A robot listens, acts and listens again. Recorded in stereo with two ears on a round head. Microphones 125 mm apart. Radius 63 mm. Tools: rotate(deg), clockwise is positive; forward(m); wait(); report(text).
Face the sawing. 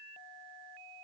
wait()
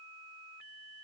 wait()
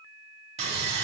rotate(45)
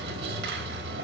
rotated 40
rotate(95)
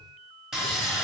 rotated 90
report("Found it: sawing, straight ahead, 1 to 2 m away.")